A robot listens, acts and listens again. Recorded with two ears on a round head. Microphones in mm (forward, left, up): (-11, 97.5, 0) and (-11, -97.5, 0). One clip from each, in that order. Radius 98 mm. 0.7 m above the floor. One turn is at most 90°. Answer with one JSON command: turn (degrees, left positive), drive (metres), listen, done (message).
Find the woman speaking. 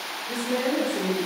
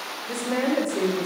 {"turn": -55}
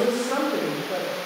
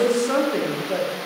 {"turn": -40}
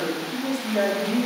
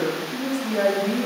{"done": "Found it: a woman speaking, straight ahead."}